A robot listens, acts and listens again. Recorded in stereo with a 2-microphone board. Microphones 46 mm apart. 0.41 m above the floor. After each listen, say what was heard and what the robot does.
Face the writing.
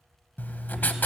The writing: about 40° left or 140° left. Turn 40° left.
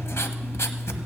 So it is at 100° left. Turn 100° left.
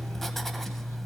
Facing the writing.